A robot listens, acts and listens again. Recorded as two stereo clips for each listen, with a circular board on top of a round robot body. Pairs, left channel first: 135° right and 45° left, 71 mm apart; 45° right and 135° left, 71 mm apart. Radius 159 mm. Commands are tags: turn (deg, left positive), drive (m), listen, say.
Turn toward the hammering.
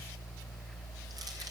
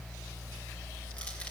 <listen/>
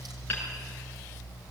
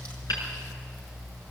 <turn deg="-70"/>
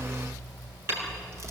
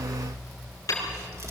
<turn deg="-10"/>
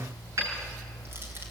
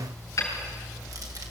<say>Facing the hammering, over 4 m away.</say>